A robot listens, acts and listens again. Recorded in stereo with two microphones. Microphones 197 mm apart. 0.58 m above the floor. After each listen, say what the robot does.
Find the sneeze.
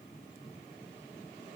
Keep listening.
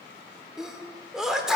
Turn 30° right.
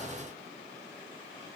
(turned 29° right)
Keep listening.
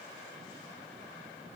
I heard a sneeze, but can't make it out now. It was about 25° left or 150° right.